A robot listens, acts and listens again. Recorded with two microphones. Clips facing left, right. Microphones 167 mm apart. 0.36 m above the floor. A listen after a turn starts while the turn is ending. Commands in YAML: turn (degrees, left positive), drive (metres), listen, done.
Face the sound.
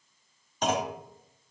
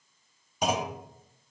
turn: -30
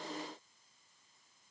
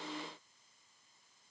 listen: true
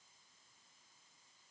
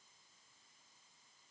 done: "I heard a clunk, but can't make it out now. It was about 20° left or 140° right."